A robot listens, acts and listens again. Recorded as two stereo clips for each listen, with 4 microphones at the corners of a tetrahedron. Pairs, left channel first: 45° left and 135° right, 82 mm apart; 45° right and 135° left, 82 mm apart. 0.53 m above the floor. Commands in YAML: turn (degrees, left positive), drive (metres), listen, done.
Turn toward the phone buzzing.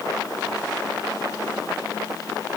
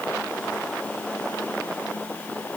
listen: true
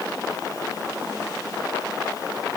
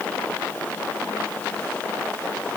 listen: true
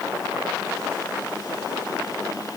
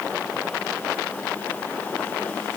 done: "I can't make out a phone buzzing."